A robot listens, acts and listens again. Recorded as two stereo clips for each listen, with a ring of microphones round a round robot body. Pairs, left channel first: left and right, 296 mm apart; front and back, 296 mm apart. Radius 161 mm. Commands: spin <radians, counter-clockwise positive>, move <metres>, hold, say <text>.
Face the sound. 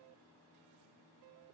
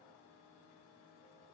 hold
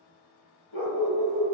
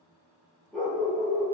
spin 1.48
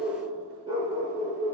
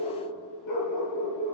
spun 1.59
spin -0.35
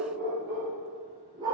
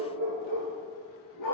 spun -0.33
spin -0.26
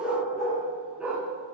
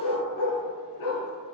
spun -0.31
say Found it: a dog barking, straight ahead, 2 to 4 m away.